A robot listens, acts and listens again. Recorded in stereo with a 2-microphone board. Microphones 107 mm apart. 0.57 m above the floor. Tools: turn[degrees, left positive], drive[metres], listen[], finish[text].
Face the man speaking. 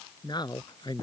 Thought: The man speaking: about 40° left or 140° left.
Action: turn[40]
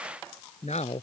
Thought: So it is at 100° left.
Action: turn[100]
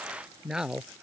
Action: finish[Facing the man speaking.]